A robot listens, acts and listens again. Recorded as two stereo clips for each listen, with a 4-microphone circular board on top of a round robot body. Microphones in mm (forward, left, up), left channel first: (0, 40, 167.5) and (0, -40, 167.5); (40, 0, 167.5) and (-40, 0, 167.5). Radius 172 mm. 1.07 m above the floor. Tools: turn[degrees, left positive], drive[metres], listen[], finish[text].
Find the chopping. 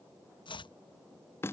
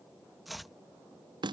Thought: The chopping: 90° left.
Action: turn[90]
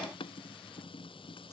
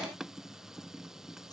Action: listen[]
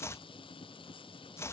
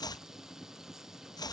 Thought: The chopping is now 35° left.
Action: turn[35]
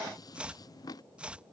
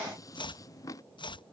Thought: The chopping is now 15° right.
Action: turn[-15]
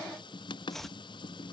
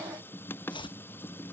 Action: finish[Facing the chopping.]